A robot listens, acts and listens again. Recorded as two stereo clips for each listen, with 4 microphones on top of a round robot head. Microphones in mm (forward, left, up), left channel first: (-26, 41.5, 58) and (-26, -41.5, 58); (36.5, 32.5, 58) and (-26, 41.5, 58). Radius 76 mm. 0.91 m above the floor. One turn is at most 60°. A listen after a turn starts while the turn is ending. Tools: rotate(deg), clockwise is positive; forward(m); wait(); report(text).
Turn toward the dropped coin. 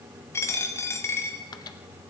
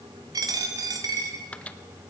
rotate(-60)
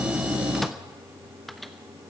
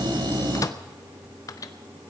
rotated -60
rotate(-60)
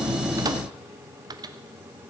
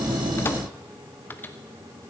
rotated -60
rotate(-30)
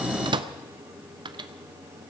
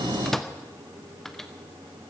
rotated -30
report("I heard a dropped coin from this way, but can't make it out now.")